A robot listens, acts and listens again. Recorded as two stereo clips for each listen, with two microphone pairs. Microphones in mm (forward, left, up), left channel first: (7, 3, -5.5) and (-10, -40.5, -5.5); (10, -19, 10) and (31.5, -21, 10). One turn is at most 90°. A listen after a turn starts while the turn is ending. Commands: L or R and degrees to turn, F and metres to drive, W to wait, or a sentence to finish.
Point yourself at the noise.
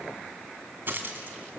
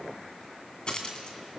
R90
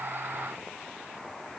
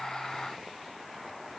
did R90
R50
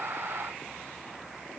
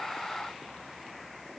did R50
Facing where the dropped coin came from. I can't hear it now.